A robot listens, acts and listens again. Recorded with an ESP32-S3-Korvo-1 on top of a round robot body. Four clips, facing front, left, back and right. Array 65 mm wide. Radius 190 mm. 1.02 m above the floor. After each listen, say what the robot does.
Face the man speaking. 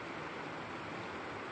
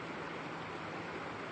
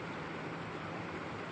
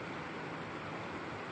Keep listening.
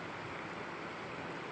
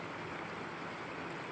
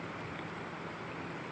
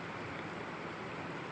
Keep listening.
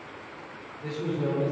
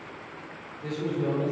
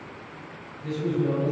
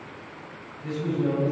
Turn 45° left.
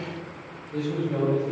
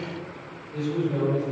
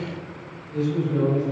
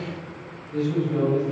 Facing the man speaking.